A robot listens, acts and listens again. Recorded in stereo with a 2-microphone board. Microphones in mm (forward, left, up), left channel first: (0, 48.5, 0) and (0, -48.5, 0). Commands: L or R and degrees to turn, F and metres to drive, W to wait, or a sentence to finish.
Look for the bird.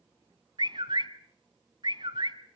R45
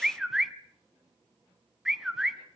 Found it: a bird, straight ahead.